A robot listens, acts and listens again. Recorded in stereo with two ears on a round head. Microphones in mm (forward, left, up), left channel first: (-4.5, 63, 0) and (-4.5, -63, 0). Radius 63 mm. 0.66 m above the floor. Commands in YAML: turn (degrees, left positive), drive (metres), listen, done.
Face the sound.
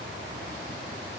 listen: true
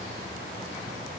listen: true
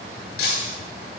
turn: 60
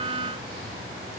listen: true
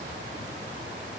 done: "I heard breaking glass, but can't make it out now. It was about straight ahead or 60° left."